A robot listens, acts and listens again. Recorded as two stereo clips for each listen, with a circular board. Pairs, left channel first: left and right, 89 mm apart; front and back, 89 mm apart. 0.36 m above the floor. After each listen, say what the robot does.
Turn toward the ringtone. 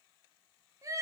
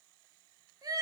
Keep listening.
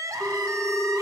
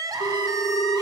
Turn 10° left.
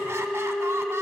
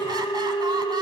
Found it: a ringtone, straight ahead.